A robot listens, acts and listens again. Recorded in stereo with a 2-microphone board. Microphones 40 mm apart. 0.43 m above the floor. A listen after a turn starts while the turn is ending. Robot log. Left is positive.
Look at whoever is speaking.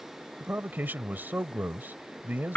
note: The man speaking: about 50° right or 130° right.
cmd yaw -50
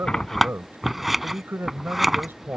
note: So it is at 70° right.
cmd yaw -70
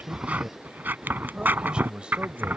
note: The man speaking is now 25° right.
cmd yaw -25
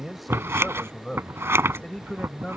note: The man speaking is now 15° left.
cmd yaw +15
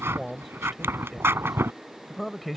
end: Found it: a man speaking, straight ahead.